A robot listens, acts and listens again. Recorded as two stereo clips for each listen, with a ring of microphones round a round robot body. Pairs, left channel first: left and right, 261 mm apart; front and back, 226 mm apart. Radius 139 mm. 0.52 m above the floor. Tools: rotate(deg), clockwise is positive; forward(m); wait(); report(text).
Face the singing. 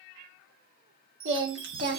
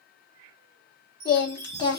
rotate(65)
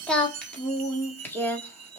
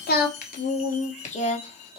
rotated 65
rotate(-15)
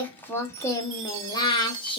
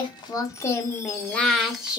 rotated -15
rotate(-105)
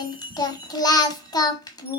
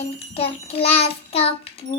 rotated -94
rotate(-30)
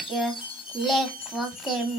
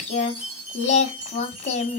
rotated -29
report("Facing the singing.")